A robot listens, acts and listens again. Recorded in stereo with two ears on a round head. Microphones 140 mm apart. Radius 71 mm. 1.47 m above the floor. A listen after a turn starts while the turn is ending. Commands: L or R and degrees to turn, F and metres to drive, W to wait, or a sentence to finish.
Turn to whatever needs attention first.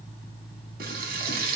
W
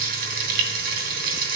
W
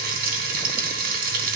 I can't make out anything urgent, only frying.